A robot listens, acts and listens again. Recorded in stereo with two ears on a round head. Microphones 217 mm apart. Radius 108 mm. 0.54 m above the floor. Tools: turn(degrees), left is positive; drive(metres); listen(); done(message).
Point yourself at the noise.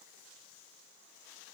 listen()
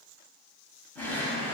turn(degrees=30)
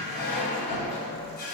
turn(degrees=140)
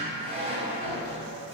turn(degrees=-25)
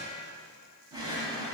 turn(degrees=-15)
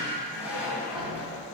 done("Found it: a drawer, straight ahead.")